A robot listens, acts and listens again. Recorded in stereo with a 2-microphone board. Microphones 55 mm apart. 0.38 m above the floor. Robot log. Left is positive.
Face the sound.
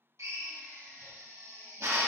note: The drill: about 60° right or 120° right.
cmd yaw -60
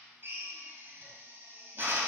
note: So it is at 50° right.
cmd yaw -50
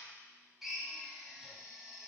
end: Found it: a drill, straight ahead.